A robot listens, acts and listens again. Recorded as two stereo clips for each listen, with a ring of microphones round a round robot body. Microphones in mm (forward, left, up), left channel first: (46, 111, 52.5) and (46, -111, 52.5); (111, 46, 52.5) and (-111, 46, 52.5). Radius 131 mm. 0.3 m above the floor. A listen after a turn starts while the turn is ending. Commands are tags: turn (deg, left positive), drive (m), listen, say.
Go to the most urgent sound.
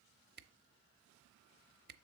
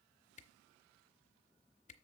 <listen/>
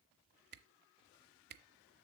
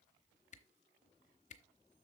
<listen/>
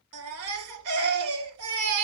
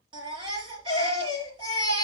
<turn deg="-110"/>
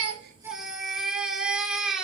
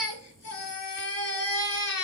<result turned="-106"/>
<drive m="1.0"/>
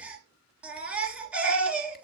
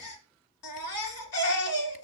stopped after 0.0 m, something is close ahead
<say>Something is in my way. I am facing the baby crying but have not reached it.</say>